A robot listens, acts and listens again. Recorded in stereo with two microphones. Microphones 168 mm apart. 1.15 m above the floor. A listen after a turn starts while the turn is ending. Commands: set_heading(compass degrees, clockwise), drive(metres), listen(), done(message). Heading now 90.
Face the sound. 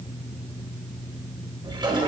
set_heading(120)
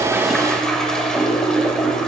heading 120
done("Found it: a toilet flushing, straight ahead.")